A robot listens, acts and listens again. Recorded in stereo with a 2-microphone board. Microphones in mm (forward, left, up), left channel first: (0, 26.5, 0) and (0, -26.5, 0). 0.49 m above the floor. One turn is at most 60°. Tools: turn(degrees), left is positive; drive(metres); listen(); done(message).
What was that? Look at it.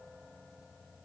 listen()
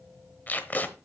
turn(degrees=35)
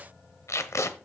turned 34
turn(degrees=60)
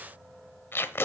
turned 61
turn(degrees=50)
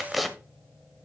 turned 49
done("Found it: tape being pulled, straight ahead, 1 to 2 m away.")